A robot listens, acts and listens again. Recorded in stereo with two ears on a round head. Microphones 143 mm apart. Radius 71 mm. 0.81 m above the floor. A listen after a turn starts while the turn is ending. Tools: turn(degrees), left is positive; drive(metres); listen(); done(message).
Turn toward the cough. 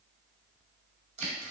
listen()
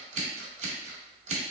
listen()
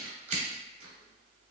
done("I can't make out a cough, only scissors.")